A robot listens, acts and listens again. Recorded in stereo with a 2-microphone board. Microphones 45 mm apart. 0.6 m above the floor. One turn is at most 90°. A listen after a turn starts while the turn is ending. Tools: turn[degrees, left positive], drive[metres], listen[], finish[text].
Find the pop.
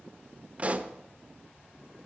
Thought: The pop: about 35° right or 145° right.
Action: turn[-35]
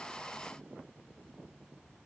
Action: listen[]
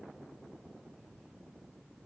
Action: finish[I heard a pop, but can't make it out now. It was about straight ahead or 110° right.]